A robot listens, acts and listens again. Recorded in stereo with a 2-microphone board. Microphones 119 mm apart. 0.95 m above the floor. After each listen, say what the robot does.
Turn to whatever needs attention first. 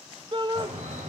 Turn 40° right.
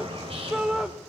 Facing the shout.